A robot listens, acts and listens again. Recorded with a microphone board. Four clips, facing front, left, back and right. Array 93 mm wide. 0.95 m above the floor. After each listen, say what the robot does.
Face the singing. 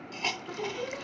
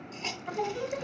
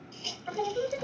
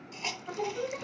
Turn 145° left.
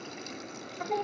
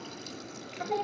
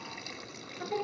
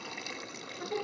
Turn 50° left.
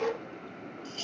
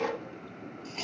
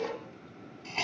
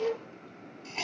Found it: singing, straight ahead.